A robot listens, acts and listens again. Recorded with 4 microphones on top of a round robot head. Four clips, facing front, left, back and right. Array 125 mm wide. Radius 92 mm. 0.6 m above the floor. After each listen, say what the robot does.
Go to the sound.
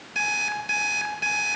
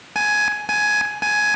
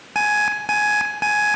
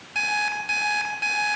Turn 145° left.
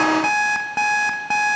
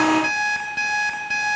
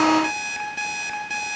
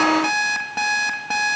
Turn 25° right.
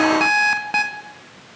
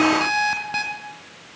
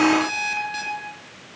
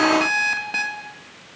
Drive 1.0 m forward.
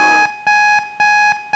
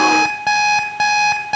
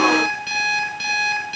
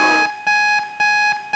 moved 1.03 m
Turn 10° left.
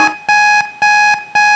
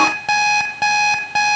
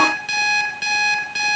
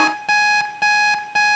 Drive 1.0 m forward.
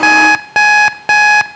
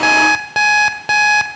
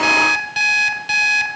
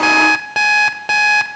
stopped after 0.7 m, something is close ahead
Arrived at the alarm clock, straight ahead.